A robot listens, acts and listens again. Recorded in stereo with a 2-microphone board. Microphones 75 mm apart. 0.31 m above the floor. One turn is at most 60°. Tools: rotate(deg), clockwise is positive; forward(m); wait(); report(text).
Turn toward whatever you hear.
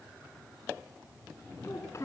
rotate(-40)
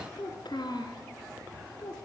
rotate(-60)
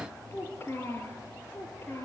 rotate(-35)
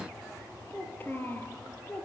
rotate(-25)
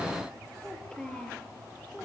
rotate(-10)
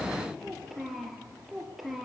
report("Facing the child speaking, over 4 m away.")